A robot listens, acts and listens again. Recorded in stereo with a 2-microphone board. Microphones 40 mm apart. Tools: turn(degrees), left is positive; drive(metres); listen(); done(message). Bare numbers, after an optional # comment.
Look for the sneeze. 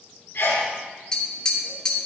turn(90)
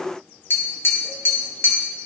done("I heard a sneeze from this way, but can't make it out now.")